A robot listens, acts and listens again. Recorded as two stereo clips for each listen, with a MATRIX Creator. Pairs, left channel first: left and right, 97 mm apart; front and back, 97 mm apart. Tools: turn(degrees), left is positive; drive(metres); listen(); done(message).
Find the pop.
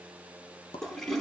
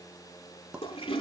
turn(degrees=100)
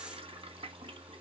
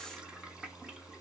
done("I heard a pop from this way, but can't make it out now.")